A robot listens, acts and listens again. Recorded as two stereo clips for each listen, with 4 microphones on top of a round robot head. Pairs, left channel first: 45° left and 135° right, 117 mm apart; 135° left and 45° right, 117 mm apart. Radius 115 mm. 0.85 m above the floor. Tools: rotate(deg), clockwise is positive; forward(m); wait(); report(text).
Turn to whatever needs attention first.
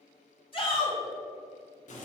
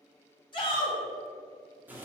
rotate(-90)
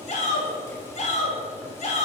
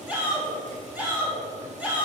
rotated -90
rotate(-35)
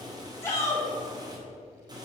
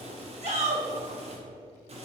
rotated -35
rotate(20)
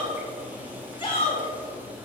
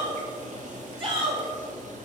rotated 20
report("Facing the shout.")